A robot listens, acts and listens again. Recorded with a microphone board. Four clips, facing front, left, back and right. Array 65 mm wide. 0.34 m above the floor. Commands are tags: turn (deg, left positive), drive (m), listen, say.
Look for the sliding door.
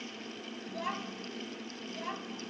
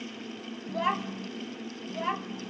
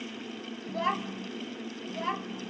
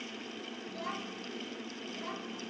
<listen/>
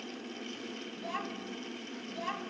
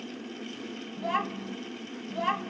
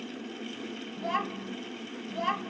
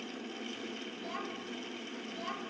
<listen/>
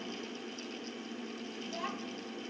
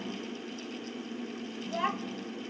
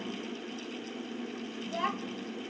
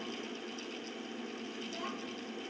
<say>I can't make out a sliding door to turn to.</say>